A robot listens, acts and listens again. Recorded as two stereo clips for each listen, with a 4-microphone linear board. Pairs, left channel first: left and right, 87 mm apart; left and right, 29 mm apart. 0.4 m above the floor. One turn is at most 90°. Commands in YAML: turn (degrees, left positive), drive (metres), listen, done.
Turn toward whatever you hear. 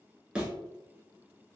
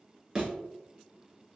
turn: -30
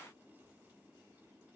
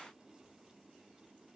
listen: true
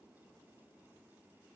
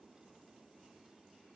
done: "I heard a thud, but can't make it out now. It was about 20° left or 140° right."